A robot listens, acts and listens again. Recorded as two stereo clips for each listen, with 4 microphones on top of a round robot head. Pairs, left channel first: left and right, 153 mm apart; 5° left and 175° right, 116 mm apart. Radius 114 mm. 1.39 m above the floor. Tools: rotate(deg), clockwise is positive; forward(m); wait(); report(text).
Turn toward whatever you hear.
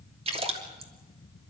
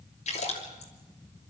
rotate(40)
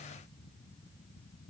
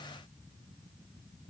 report("Facing where the splash came from. I can't hear it now.")